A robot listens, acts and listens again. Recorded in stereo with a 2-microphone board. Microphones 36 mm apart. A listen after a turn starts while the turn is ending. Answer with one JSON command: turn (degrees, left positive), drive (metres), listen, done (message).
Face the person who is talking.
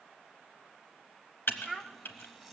{"turn": 30}
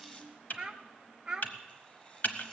{"turn": -25}
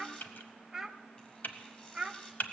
{"turn": -15}
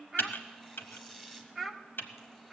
{"done": "Found it: a child speaking, straight ahead."}